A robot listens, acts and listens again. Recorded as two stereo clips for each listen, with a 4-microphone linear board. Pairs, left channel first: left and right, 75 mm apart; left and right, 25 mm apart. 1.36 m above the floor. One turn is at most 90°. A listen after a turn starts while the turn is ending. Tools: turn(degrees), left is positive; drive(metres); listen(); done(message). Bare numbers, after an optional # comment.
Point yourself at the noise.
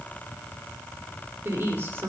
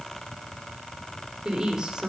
# The woman speaking: about 35° right or 145° right.
turn(-35)
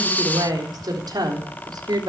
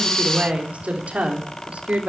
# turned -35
# So it is at 105° right.
turn(-90)
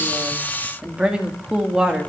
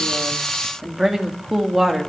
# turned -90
# The woman speaking is now 10° right.
turn(-10)
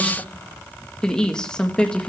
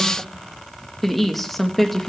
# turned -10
# The woman speaking is now 10° left.
turn(10)
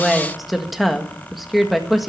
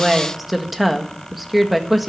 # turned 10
done("Facing the woman speaking, 1 to 2 m away.")